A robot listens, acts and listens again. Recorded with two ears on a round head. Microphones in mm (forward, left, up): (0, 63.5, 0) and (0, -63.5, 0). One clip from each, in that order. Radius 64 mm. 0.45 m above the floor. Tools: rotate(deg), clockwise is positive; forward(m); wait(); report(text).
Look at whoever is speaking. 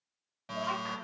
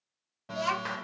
rotate(60)
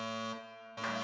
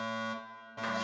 wait()
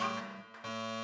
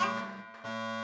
rotate(20)
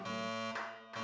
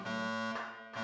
wait()
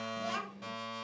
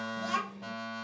report("Facing the child speaking.")